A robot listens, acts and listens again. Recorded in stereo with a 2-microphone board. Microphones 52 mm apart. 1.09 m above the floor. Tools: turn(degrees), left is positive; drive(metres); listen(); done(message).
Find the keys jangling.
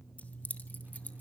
turn(degrees=30)
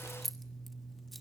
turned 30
done("Facing the keys jangling.")